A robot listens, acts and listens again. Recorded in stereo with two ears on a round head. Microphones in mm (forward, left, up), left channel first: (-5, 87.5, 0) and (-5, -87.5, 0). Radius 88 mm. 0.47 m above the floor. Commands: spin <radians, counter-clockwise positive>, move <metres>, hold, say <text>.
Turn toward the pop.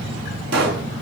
spin -1.05
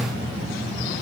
hold
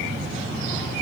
say I heard a pop, but can't make it out now. It was about straight ahead or 60° right.